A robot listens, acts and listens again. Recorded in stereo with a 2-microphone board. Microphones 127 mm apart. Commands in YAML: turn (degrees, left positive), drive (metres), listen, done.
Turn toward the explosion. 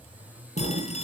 turn: -65
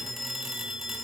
listen: true
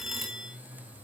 done: "I heard an explosion, but can't make it out now. It was about straight ahead or 50° right."